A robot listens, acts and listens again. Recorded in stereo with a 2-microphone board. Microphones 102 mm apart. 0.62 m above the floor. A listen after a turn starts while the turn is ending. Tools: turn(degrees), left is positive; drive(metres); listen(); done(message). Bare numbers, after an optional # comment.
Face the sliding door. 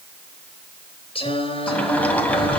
turn(30)
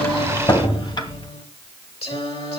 # So it is at 135° left.
turn(135)
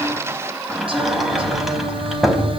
done("Found it: a sliding door, straight ahead.")